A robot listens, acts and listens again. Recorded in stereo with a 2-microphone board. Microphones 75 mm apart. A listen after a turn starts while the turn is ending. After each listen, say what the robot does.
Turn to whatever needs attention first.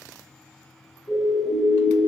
Turn 70° left.
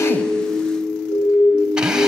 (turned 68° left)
Turn 40° left.
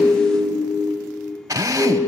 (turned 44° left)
Facing the siren, over 4 m away.